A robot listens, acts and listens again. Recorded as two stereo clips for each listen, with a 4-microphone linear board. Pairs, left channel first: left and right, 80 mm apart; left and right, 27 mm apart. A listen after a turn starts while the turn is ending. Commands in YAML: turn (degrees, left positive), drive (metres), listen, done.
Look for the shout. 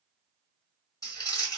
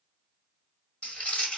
listen: true
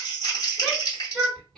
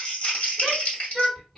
turn: 30
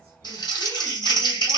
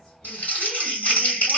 listen: true
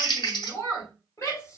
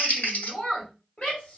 turn: 140
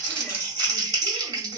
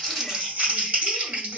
listen: true
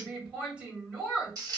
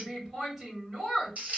turn: -15
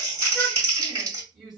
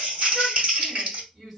done: "Found it: a shout, straight ahead."